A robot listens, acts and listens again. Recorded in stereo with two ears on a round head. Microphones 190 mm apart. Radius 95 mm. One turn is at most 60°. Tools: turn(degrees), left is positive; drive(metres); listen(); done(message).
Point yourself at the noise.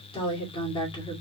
turn(degrees=20)
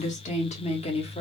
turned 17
turn(degrees=25)
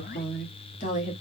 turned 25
turn(degrees=35)
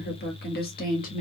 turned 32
turn(degrees=35)
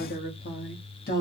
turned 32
turn(degrees=60)
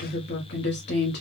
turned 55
turn(degrees=50)
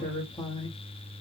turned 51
turn(degrees=20)
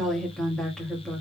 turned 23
done("Facing the woman speaking, 1 to 2 m away.")